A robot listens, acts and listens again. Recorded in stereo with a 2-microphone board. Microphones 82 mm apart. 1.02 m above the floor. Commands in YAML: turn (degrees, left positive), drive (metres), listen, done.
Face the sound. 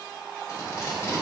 turn: 35
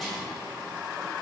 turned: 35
listen: true
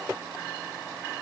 listen: true
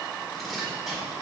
done: "Facing the tape being pulled, 1 to 2 m away."